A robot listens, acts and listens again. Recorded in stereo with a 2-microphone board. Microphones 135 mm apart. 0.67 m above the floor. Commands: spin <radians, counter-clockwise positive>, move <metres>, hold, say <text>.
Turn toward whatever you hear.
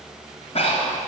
spin 0.87
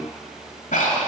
spin 1.40
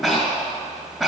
say Facing the breathing, 1 to 2 m away.